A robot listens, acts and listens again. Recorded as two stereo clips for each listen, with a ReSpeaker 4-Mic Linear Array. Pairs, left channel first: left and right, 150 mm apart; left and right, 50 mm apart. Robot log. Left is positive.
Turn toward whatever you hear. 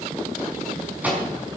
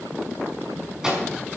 cmd yaw -30
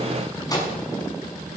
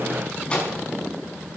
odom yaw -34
note: So it is at 25° left.
cmd yaw +25
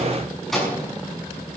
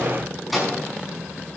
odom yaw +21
end: Found it: a microwave, straight ahead, over 4 m away.